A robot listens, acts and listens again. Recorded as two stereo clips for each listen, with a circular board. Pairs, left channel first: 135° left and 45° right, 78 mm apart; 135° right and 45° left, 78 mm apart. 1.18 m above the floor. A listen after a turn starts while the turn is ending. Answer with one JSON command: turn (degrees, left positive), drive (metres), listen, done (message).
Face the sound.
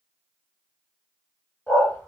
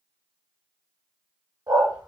{"turn": 70}
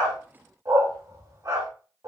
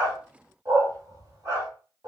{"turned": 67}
{"done": "Found it: a dog barking, straight ahead."}